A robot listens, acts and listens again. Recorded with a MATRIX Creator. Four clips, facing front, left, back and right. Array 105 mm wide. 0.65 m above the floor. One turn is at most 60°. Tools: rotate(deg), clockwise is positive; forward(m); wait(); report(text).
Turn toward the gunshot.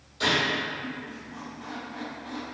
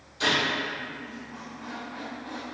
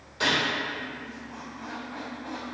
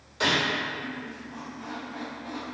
rotate(60)
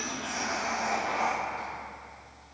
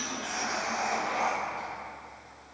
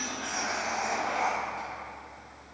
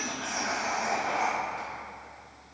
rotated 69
rotate(60)
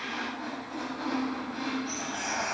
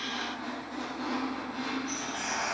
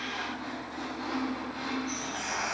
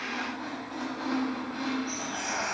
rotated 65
report("I heard a gunshot from this way, but can't make it out now.")